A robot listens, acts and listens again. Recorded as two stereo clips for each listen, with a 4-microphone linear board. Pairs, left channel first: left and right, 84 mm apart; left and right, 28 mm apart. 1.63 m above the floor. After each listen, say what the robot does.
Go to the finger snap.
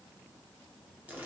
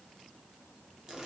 Keep listening.
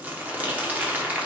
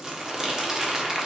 Keep listening.
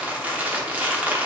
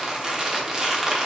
I can't make out a finger snap, only crumpling.